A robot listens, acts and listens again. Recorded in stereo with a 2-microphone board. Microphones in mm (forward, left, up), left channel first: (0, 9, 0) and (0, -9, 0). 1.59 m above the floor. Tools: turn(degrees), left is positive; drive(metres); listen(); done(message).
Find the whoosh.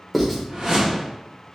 turn(degrees=-40)
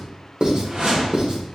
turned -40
turn(degrees=-90)
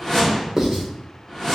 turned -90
turn(degrees=20)
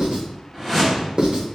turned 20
done("Found it: a whoosh, straight ahead.")